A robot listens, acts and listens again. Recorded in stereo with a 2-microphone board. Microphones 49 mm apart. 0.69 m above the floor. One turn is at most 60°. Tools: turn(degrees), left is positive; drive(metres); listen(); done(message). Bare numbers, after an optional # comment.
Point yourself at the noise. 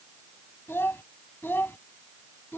# The child speaking: about 45° left or 135° left.
turn(45)
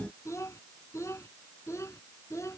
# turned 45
# So it is at 85° left.
turn(60)
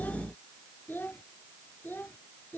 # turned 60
# The child speaking is now 45° left.
turn(45)
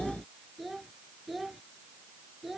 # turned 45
done("Facing the child speaking.")